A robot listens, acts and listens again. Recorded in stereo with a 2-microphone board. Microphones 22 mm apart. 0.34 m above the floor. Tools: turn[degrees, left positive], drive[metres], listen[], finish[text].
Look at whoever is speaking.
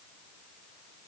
Action: listen[]
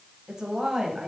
Thought: The woman speaking: about 35° right or 145° right.
Action: turn[-35]
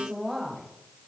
Thought: So it is at 10° right.
Action: turn[-10]
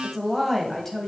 Action: finish[Facing the woman speaking, 1 to 2 m away.]